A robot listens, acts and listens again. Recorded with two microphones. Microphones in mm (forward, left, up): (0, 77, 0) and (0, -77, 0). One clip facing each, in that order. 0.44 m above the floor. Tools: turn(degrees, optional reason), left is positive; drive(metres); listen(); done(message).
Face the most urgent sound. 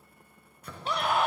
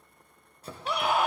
turn(degrees=-30)
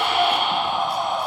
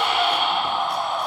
turn(degrees=20, reason="So it is at 20° left.")
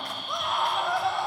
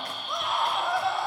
done("Found it: a scream, straight ahead, 1 to 2 m away.")